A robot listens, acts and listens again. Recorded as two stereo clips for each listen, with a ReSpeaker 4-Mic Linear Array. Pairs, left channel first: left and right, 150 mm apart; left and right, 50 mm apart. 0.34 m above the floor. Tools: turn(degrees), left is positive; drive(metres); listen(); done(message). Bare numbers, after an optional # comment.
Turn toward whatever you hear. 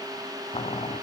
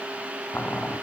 # The boiling: about 45° left or 135° left.
turn(45)
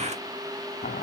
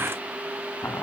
# So it is at 90° left.
turn(90)
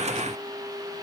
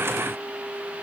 listen()
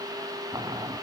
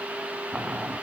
# The boiling is now 25° right.
turn(-25)
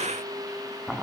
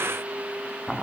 done("Found it: boiling, straight ahead, under 1 m away.")